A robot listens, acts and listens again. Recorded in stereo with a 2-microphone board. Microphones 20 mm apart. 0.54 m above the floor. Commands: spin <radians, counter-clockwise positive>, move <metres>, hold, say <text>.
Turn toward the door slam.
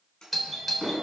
spin 0.61
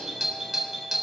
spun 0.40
hold
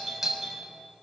say I heard a door slam, but can't make it out now. It was about 15° left or 120° left.